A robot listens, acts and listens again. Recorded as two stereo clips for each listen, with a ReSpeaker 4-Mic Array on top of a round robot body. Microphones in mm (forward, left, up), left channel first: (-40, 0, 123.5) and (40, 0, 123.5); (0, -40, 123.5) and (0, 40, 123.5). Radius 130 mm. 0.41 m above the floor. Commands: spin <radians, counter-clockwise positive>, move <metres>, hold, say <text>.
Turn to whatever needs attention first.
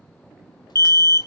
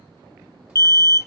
spin -2.36
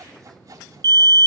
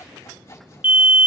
spin 0.35
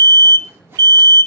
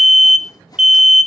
say Found it: an alarm, straight ahead.